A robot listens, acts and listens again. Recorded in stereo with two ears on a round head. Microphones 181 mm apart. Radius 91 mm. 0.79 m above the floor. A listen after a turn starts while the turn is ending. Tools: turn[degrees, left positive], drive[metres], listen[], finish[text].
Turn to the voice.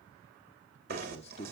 Thought: The man speaking: about 35° left or 145° left.
Action: turn[35]
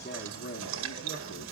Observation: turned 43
Thought: So it is at 100° left.
Action: turn[100]
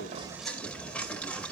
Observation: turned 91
Thought: Nothing new. It was at 10° left.
Action: turn[10]
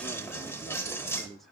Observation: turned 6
Action: finish[Found it: a man speaking, straight ahead, 1 to 2 m away.]